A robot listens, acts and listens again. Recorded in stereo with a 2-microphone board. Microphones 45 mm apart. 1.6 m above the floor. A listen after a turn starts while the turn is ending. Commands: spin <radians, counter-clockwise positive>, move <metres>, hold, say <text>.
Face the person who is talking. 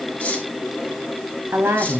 spin -1.57
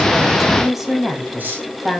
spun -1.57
say Facing the woman speaking.